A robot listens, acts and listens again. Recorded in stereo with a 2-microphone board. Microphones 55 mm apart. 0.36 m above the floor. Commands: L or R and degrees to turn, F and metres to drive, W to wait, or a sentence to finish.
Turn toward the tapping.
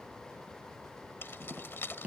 R25
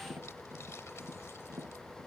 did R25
R135
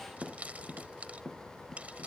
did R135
Found it: tapping, straight ahead.